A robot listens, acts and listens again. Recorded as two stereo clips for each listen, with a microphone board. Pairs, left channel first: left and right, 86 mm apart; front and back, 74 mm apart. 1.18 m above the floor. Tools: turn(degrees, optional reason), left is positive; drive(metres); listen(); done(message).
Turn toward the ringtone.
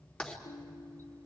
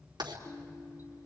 turn(degrees=85, reason="The ringtone: 85° left.")
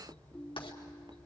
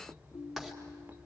turn(degrees=10, reason="The ringtone is now 10° left.")
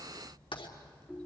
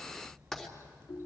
done("Found it: a ringtone, straight ahead.")